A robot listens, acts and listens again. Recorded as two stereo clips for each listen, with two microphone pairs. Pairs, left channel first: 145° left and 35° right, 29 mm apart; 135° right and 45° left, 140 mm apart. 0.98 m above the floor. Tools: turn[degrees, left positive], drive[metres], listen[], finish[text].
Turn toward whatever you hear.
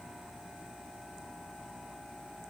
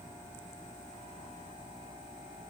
Action: listen[]
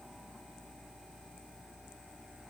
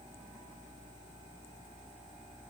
Action: listen[]
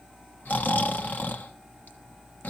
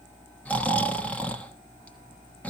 Thought: The snoring: 145° left.
Action: turn[145]
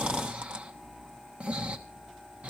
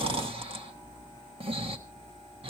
Action: finish[Facing the snoring.]